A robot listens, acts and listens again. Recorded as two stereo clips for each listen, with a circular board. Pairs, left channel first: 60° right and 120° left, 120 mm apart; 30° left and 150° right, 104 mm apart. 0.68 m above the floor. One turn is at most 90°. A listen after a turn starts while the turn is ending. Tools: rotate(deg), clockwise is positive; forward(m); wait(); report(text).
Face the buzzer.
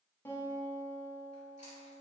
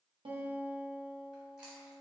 wait()
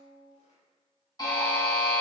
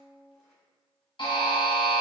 report("Facing the buzzer.")